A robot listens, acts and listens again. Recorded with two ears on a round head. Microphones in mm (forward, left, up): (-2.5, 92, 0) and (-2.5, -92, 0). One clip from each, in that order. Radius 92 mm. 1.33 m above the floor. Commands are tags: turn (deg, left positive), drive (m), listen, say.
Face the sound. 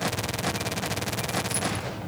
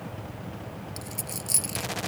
<turn deg="-50"/>
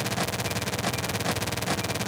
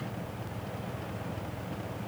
<listen/>
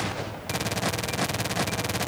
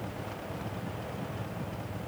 <say>I heard a dropped coin, but can't make it out now. It was about straight ahead or 80° right.</say>